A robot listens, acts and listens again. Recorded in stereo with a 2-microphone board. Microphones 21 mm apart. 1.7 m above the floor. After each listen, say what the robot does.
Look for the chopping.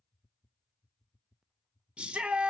Keep listening.
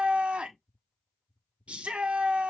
Keep listening.
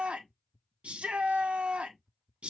I can't make out chopping, only a shout.